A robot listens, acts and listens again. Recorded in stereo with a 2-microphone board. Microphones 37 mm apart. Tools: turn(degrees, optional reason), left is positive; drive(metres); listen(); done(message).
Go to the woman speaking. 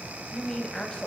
turn(degrees=20, reason="The woman speaking: about 20° left or 160° left.")
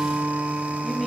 listen()
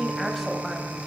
drive(metres=1.0)
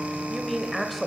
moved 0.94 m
drive(metres=1.0)
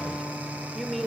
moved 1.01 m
drive(metres=1.0)
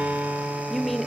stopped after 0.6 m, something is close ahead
done("Arrived at the woman speaking, straight ahead.")